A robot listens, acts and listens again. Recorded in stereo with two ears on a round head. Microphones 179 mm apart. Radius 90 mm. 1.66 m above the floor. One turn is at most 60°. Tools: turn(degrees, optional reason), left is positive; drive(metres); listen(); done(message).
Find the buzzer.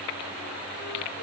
listen()
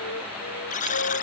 turn(degrees=40, reason="The buzzer: about 40° left or 140° left.")
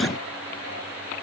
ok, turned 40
listen()
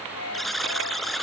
done("Found it: a buzzer, straight ahead.")